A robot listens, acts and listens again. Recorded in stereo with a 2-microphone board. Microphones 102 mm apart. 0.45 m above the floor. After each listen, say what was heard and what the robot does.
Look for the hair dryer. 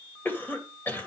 Keep listening.
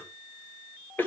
Keep listening.
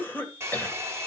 The hair dryer: about 25° right or 155° right. Turn 25° right.
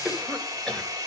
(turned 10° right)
The hair dryer: about 35° right or 145° right. Turn 35° right.
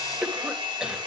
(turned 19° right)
So it is at 120° right. Turn 120° right.
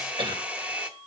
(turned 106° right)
The hair dryer is now 15° right. Turn 15° right.
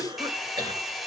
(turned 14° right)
Found it: a hair dryer, straight ahead, 1 to 2 m away.